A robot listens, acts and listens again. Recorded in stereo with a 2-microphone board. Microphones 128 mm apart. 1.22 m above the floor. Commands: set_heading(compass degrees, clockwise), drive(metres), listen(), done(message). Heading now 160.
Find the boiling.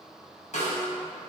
listen()
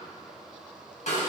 listen()
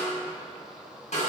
done("I can't make out boiling to turn to.")